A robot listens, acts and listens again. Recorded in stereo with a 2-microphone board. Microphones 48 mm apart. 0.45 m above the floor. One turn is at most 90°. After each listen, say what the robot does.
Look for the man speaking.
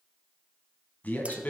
Turn 35° left.
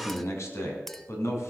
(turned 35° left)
Turn 90° left.
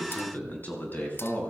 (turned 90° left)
Turn 40° left.
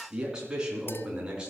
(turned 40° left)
Turn 15° right.
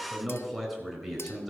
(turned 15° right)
Found it: a man speaking, straight ahead.